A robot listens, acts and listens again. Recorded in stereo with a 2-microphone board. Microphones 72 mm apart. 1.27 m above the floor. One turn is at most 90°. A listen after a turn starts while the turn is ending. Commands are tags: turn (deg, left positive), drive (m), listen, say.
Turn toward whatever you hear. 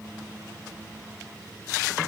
<listen/>
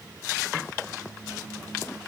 <listen/>
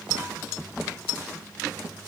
<say>I can't make out anything to turn to.</say>